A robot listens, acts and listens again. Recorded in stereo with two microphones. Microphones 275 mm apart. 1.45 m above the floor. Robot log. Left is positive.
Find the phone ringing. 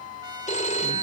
note: The phone ringing: about 25° left or 155° left.
cmd yaw +25
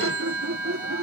note: So it is at 130° left.
cmd yaw +130
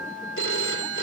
note: The phone ringing is now 50° left.
cmd yaw +50
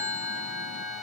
note: The phone ringing is now 10° right.
cmd yaw -10
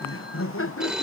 end: Facing the phone ringing.